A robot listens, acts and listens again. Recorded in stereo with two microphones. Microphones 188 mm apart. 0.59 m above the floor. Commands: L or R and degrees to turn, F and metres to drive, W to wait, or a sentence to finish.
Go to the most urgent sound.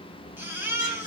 R30
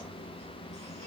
W
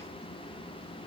W
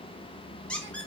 I heard a baby crying, but can't make it out now. It was about 20° left or 140° right. I did not reach it.